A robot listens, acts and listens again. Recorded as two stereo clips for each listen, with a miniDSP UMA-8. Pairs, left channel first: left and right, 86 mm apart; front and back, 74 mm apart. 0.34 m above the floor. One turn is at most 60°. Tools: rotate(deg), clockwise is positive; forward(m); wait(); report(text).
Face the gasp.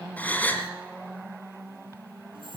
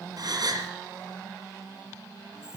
rotate(-60)
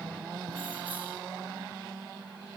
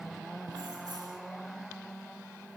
rotate(-60)
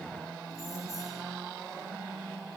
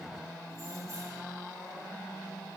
rotate(-40)
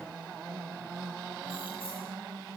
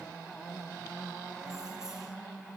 report("Facing where the gasp came from. I can't hear it now.")